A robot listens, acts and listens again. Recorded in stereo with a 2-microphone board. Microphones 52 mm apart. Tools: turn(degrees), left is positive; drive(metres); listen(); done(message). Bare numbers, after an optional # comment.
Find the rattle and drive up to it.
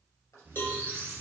listen()
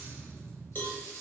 turn(90)
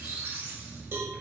listen()
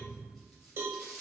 drive(1.0)
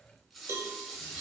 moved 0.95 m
drive(1.0)
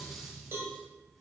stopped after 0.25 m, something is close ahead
listen()
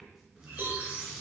done("I am next to the rattle.")